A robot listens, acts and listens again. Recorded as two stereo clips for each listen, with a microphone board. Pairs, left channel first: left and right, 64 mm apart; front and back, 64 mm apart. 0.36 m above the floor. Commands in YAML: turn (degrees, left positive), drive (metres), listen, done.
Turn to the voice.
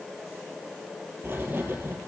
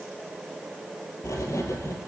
listen: true
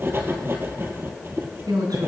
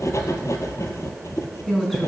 turn: -85
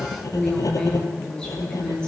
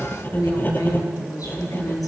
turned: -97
turn: 10
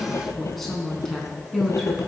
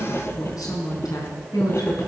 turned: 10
done: "Facing the woman speaking."